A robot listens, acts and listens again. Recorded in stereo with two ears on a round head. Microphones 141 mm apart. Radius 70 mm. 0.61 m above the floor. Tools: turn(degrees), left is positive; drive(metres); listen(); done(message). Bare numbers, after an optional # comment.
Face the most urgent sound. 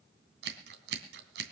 listen()
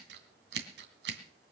listen()
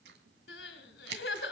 turn(90)
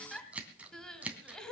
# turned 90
done("Found it: crying, straight ahead.")